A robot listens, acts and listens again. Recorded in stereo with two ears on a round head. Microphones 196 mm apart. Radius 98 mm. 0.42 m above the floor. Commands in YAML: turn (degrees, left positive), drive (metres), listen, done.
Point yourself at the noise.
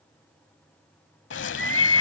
turn: 60
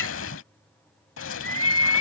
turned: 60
turn: 60
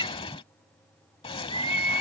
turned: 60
turn: 25
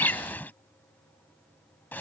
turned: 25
turn: 10
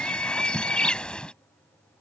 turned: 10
done: "Found it: a bird, straight ahead."